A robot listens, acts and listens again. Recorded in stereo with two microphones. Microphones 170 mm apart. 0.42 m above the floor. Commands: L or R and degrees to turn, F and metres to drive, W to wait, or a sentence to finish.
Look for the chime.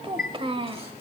L65
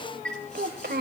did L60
Facing the chime.